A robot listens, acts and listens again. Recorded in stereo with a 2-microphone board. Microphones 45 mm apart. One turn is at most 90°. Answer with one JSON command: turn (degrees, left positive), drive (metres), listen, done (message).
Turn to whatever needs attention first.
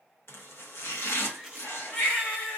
{"turn": 30}
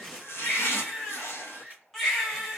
{"done": "Facing the baby crying."}